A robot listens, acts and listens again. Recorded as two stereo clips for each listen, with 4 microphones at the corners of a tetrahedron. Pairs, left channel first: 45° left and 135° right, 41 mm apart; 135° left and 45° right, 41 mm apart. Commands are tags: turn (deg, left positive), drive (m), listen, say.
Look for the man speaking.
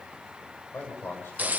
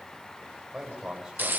<turn deg="30"/>
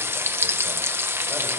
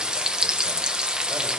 <listen/>
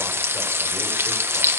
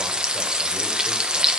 <listen/>
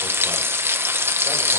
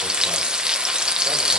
<say>Facing where the man speaking came from. I can't hear it now.</say>